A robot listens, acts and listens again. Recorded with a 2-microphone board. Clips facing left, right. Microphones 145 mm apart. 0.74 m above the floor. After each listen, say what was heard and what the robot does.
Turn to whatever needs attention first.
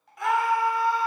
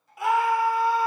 Turn 30° right.
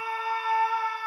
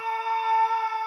So it is at 140° right. Turn 140° right.
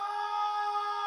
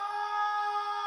Found it: a scream, straight ahead.